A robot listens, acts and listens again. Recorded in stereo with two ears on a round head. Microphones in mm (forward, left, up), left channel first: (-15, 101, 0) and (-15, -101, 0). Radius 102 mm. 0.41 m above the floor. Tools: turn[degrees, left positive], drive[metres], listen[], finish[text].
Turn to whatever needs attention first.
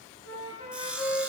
Action: listen[]
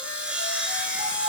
Action: listen[]
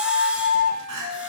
Action: turn[-90]
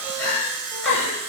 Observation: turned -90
Thought: So it is at 10° left.
Action: turn[10]
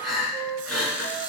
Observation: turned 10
Action: finish[Facing the crying.]